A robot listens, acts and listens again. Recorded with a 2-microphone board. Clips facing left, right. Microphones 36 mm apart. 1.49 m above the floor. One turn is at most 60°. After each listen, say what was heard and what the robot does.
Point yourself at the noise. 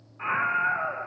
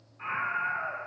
The scream: about 20° left or 160° left. Turn 20° left.
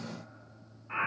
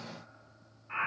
Found it: a scream, straight ahead.